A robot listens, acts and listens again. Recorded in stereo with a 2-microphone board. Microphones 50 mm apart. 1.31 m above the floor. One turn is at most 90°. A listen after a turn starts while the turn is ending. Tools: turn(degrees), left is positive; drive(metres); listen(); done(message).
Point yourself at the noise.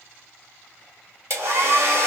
turn(degrees=-65)
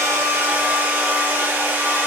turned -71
turn(degrees=-40)
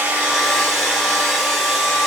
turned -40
done("Found it: a hair dryer, straight ahead.")